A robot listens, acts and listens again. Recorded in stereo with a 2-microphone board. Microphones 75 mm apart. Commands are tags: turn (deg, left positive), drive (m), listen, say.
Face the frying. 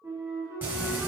<turn deg="-25"/>
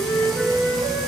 <listen/>
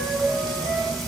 <say>Found it: frying, straight ahead.</say>